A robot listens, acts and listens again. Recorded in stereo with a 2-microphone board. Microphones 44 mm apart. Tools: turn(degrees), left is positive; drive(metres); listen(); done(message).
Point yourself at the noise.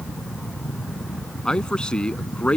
turn(degrees=25)
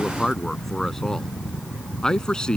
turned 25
turn(degrees=20)
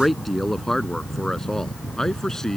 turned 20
turn(degrees=30)
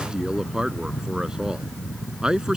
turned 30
turn(degrees=-15)
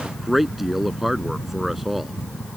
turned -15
done("Facing the man speaking.")